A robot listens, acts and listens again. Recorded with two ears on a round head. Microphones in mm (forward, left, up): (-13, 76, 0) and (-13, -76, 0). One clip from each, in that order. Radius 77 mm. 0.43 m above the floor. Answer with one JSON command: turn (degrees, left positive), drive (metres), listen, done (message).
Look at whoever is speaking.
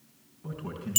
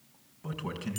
{"turn": -60}
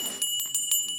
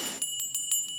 {"listen": true}
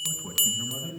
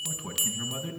{"turn": -55}
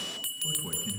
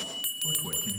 {"turn": -25}
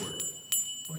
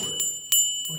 {"listen": true}
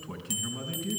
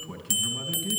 {"done": "Facing the man speaking, over 4 m away."}